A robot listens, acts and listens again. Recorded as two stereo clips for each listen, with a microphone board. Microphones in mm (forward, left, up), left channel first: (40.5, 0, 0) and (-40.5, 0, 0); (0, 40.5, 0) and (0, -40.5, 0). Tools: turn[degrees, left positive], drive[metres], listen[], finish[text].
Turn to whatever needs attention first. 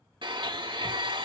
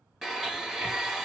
Action: listen[]
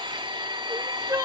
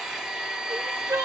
Thought: The crying: 140° right.
Action: turn[-140]
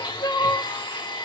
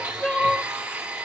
Thought: The crying is now 20° left.
Action: turn[20]
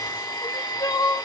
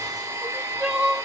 Action: finish[Facing the crying.]